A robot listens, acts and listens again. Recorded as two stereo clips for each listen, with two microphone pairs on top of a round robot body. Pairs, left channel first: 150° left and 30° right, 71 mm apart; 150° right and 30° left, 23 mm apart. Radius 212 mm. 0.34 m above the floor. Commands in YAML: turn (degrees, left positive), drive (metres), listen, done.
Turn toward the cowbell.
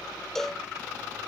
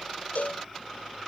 turn: -130
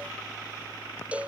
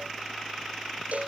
turn: 40
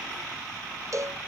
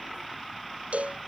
turn: 10
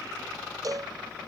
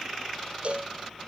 done: "Facing the cowbell."